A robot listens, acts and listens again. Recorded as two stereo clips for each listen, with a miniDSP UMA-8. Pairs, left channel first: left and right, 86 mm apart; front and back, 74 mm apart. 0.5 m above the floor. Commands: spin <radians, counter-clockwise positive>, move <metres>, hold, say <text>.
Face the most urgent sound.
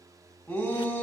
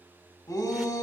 spin 0.70
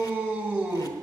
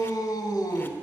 say Found it: a shout, straight ahead.